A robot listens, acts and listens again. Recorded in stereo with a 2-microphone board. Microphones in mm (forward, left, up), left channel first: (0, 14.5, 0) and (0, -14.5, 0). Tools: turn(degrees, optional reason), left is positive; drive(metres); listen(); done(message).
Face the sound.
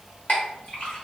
turn(degrees=55, reason="The clink: about 55° left or 125° left.")
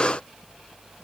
listen()
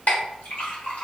turn(degrees=70, reason="So it is at 70° left.")
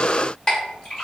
turn(degrees=30, reason="The clink is now 30° left.")
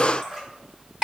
turn(degrees=-15, reason="The clink is now 15° right.")
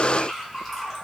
done("Found it: a clink, straight ahead.")